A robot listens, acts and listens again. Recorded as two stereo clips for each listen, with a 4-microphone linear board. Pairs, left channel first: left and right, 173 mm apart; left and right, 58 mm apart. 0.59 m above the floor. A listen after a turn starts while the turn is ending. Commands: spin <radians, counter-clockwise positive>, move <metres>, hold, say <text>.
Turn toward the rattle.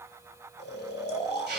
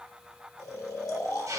hold
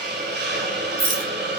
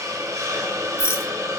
spin 0.96
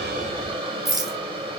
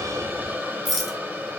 say Facing the rattle.